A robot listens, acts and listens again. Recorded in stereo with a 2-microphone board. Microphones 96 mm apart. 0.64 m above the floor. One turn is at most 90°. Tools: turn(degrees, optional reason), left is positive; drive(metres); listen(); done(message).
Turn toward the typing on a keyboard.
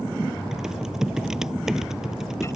turn(degrees=-30)
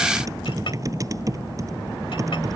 turn(degrees=-90, reason="So it is at 145° right.")
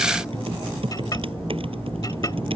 turn(degrees=-70, reason="The typing on a keyboard is now 70° right.")
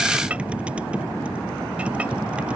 listen()
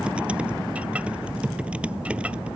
turn(degrees=-10, reason="The typing on a keyboard is now 10° right.")
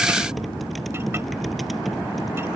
done("Found it: typing on a keyboard, straight ahead.")